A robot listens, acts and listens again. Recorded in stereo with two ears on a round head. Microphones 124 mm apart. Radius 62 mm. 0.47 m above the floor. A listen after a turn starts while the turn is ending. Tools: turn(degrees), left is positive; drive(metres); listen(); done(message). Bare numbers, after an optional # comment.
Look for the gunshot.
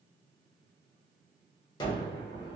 # The gunshot: about 30° left or 150° left.
turn(30)
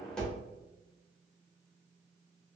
done("Found it: a gunshot, straight ahead.")